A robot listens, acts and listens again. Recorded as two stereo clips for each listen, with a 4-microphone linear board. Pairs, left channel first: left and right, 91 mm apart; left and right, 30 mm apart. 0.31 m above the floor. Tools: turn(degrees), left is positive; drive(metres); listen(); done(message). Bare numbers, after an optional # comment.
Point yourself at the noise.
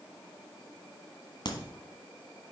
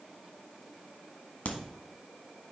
# The crack: about 55° left or 125° left.
turn(55)
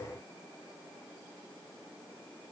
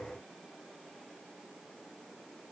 listen()
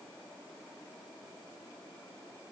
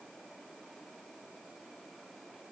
done("I heard a crack, but can't make it out now. It was about straight ahead or 70° left.")